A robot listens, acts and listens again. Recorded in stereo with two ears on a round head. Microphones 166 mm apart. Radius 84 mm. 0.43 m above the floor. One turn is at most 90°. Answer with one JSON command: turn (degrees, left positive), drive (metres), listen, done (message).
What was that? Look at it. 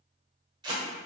{"turn": -25}
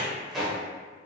{"done": "Found it: tape being pulled, straight ahead."}